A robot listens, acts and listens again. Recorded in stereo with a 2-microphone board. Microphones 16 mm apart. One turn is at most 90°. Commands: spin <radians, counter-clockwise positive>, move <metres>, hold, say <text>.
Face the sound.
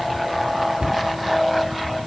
spin -1.57
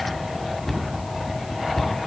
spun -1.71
spin 0.35
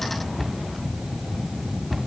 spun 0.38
say Facing the cupboard door, 2 to 4 m away.